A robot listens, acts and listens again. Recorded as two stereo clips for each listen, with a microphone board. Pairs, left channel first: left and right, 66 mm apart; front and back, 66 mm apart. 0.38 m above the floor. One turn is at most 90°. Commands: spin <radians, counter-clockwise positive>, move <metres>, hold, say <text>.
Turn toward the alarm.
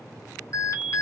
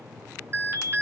spin 1.57
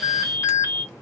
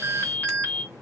spin 0.96
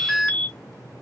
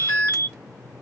spin 0.17
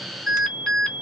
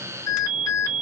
say Facing the alarm.